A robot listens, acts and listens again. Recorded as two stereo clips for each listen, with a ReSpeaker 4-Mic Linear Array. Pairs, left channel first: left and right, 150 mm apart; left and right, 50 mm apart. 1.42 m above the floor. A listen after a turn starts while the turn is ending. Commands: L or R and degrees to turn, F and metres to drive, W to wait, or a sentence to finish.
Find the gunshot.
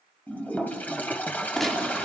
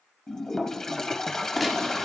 L30
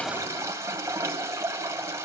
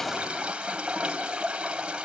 W
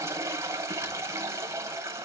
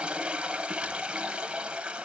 I heard a gunshot, but can't make it out now. It was about 30° right or 150° left.